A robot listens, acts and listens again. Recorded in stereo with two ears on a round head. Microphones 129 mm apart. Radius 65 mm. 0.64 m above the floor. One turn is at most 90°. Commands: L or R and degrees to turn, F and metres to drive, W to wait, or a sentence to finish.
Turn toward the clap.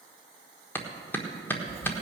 L30
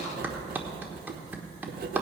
R15
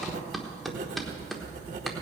Facing the clap.